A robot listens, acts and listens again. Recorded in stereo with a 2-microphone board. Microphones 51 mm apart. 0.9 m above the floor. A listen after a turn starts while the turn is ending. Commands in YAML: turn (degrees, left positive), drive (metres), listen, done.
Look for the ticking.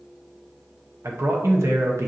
listen: true
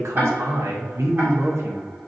turn: -50
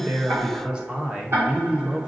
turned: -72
turn: -55
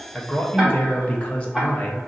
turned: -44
turn: -10
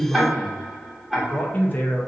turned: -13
done: "Facing the ticking."